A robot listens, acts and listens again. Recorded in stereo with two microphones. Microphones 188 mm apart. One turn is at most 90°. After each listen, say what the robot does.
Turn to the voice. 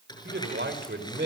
Turn 75° right.
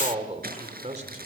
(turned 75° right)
Turn 40° right.
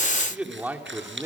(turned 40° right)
Turn 15° right.
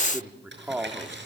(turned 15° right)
Turn 10° right.
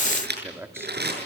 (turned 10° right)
Turn 15° right.
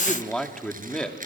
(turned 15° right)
Facing the man speaking, 2 to 4 m away.